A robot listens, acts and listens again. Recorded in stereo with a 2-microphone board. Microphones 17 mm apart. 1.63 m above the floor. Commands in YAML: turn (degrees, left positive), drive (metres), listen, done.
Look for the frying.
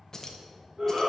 listen: true
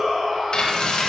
turn: 55
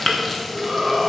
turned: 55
done: "Found it: frying, straight ahead, 1 to 2 m away."